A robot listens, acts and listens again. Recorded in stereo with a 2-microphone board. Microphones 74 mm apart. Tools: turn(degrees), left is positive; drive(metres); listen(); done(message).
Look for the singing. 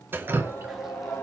turn(degrees=30)
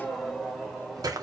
done("Facing the singing.")